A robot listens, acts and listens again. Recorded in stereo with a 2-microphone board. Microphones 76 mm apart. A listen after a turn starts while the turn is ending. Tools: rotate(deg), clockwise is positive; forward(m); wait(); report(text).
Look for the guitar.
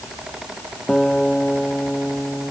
rotate(-30)
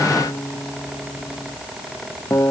rotate(-140)
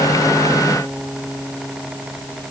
report("Facing the guitar.")